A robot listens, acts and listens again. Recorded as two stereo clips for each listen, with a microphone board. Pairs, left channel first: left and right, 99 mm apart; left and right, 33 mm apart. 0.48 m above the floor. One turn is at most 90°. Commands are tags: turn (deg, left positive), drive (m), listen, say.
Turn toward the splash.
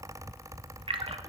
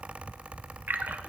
<turn deg="-70"/>
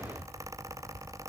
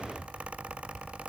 <listen/>
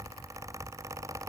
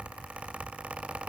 <say>I heard a splash, but can't make it out now. It was about straight ahead or 40° right.</say>